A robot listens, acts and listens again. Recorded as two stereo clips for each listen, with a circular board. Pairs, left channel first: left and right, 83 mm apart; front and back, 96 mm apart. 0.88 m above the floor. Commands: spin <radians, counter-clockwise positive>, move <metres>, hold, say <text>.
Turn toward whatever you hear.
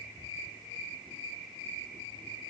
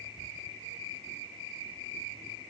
hold
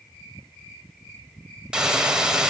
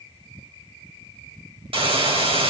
spin -2.97
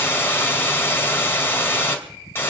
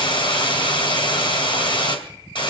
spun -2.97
spin 0.52
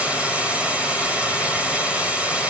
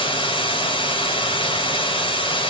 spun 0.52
spin -0.26
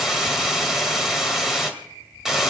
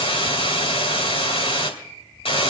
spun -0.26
say Found it: a hiss, straight ahead.